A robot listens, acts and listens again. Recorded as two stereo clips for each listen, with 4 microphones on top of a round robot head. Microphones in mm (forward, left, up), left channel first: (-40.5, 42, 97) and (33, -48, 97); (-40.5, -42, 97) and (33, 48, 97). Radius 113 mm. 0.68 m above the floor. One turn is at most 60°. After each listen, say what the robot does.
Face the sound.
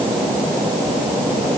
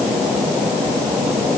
Keep listening.
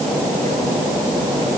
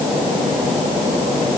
Keep listening.
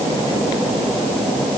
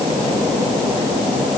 I can't make out anything to turn to.